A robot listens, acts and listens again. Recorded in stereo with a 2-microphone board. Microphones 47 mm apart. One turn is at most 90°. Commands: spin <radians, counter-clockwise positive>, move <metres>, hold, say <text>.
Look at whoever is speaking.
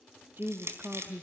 spin -0.87
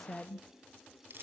say Facing the woman speaking, under 1 m away.